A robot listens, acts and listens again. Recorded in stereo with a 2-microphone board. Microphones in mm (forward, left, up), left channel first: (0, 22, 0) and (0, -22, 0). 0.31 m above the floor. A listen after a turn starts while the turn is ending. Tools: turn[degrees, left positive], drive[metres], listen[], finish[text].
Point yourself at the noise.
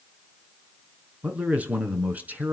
Thought: The man speaking: about 35° right or 145° right.
Action: turn[-35]
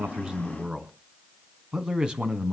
Thought: So it is at 25° right.
Action: turn[-25]
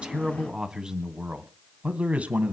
Thought: The man speaking is now 35° right.
Action: turn[-35]
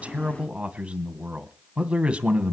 Thought: The man speaking is now 20° right.
Action: turn[-20]
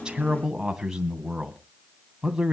Thought: The man speaking is now 10° right.
Action: turn[-10]
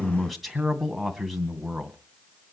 Action: finish[Facing the man speaking.]